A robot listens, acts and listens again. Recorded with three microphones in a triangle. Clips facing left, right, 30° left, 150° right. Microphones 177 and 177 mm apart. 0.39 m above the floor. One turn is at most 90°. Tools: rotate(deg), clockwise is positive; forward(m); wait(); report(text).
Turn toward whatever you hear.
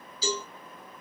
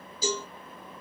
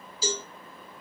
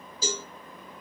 rotate(90)
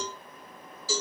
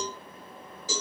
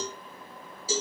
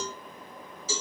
rotate(20)
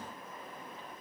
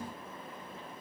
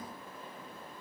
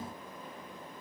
wait()
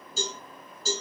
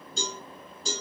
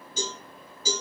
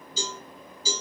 report("Facing the cowbell, 2 to 4 m away.")